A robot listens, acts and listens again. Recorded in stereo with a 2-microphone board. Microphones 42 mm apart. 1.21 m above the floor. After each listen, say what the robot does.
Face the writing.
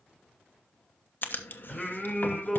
Turn 50° left.
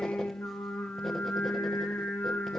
Keep listening.
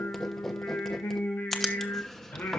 Turn 10° left.
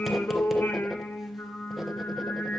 Keep listening.
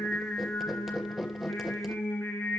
Facing the writing, 1 to 2 m away.